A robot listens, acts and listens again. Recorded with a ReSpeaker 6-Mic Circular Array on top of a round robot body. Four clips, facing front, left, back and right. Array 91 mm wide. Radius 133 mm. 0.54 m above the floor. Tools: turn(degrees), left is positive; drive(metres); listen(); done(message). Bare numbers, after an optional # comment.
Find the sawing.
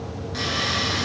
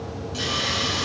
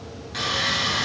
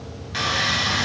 # The sawing: 95° right.
turn(-95)
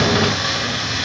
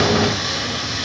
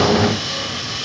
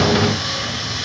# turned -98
done("Found it: sawing, straight ahead, over 4 m away.")